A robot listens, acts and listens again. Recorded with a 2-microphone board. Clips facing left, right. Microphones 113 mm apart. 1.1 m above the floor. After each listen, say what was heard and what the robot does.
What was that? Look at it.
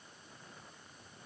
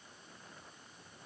Keep listening.
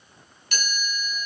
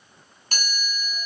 The chime: about 40° right or 140° right. Turn 40° right.
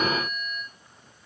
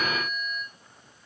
Facing the chime, over 4 m away.